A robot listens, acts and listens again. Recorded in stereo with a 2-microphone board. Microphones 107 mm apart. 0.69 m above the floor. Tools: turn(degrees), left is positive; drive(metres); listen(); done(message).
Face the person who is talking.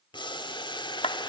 listen()
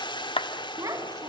turn(degrees=-30)
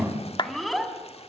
done("Facing the child speaking.")